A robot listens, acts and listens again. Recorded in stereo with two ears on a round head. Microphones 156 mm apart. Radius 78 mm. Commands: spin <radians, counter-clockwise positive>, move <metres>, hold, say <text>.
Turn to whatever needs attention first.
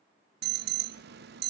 spin -1.13
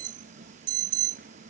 spin -0.87
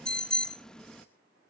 say Facing the alarm, under 1 m away.